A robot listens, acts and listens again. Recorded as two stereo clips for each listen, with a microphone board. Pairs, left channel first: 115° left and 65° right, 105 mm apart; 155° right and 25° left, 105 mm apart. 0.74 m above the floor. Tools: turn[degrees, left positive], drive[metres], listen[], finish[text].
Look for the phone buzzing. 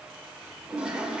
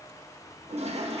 Action: listen[]
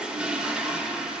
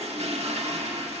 Action: listen[]
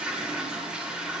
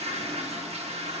Action: finish[I can't make out a phone buzzing to turn to.]